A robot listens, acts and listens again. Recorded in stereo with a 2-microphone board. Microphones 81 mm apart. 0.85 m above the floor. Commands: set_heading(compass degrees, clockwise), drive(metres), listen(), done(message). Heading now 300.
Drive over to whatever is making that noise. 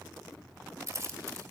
set_heading(340)
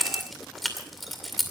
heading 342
drive(1.0)
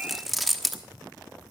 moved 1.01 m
drive(1.0)
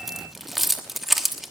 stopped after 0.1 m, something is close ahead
done("Arrived at the keys jangling, straight ahead.")